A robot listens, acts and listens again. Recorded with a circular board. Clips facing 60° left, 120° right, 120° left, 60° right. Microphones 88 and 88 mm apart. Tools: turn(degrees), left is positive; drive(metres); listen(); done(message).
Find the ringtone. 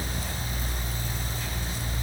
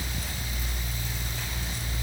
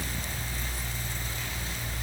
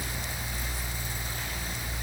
listen()
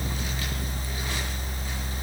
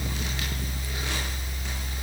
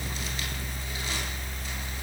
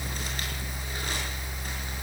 listen()
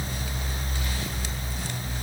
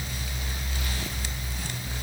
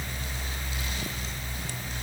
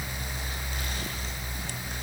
done("I can't make out a ringtone to turn to.")